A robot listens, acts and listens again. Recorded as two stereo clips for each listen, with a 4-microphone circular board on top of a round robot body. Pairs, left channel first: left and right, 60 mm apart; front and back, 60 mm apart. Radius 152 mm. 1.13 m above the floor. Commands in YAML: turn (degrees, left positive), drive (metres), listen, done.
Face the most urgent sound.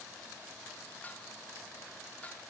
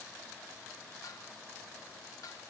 listen: true
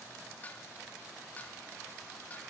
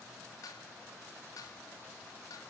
listen: true
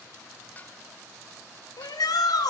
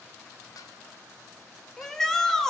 turn: 85
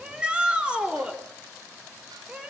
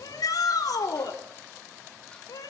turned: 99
turn: -15
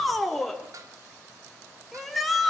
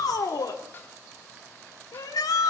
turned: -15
done: "Found it: a shout, straight ahead."